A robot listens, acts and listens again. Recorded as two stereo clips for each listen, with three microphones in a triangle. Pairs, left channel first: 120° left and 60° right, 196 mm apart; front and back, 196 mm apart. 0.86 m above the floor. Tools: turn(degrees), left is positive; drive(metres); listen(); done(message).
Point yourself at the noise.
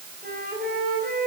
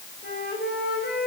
turn(degrees=-30)
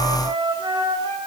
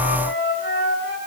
done("Found it: a flute, straight ahead, over 4 m away.")